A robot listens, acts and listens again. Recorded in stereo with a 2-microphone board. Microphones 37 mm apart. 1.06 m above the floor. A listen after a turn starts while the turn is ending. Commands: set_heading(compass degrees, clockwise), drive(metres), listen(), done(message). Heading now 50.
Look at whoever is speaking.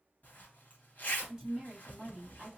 set_heading(70)
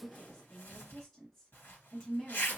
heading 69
done("Found it: a woman speaking, straight ahead.")